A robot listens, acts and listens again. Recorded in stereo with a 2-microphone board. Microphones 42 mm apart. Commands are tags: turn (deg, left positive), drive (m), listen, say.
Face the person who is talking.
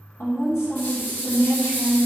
<turn deg="90"/>
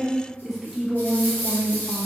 <turn deg="-10"/>
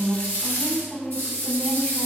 <say>Facing the woman speaking.</say>